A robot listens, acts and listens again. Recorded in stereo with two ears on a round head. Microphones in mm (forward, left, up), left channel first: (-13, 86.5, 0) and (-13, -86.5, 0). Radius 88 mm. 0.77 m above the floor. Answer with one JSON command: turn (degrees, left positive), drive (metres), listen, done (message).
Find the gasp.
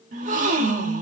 {"turn": -40}
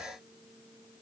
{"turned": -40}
{"listen": true}
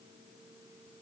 {"done": "I heard a gasp, but can't make it out now. It was about straight ahead or 100° right."}